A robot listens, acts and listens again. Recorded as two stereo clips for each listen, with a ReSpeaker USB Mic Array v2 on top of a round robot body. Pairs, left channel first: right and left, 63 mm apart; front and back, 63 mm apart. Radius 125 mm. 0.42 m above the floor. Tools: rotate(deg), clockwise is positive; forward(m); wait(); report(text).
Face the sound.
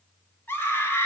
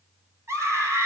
rotate(145)
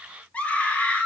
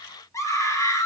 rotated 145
rotate(25)
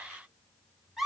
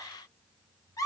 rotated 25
report("Found it: a scream, straight ahead, 2 to 4 m away.")